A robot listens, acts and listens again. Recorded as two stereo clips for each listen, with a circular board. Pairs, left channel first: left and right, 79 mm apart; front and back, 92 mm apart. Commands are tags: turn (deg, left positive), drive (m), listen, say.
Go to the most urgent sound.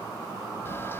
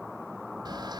<listen/>
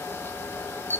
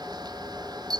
<listen/>
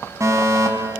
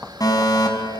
<turn deg="-45"/>
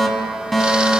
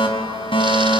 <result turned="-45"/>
<drive m="1.0"/>
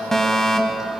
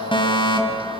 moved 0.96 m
<drive m="1.0"/>
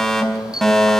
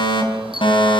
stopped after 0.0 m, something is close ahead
<say>Blocked. The fire alarm is further on, straight ahead.</say>